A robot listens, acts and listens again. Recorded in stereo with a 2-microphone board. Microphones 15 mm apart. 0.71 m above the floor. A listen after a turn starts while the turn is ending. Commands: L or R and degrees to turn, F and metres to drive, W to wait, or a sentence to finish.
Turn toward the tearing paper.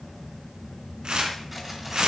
R50
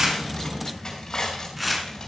Facing the tearing paper.